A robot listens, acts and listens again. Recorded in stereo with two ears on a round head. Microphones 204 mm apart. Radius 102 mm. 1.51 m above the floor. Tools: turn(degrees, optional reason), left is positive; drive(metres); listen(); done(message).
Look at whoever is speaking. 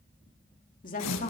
turn(degrees=40, reason="The woman speaking: about 40° left or 140° left.")
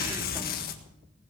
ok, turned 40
listen()
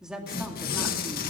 done("Facing the woman speaking.")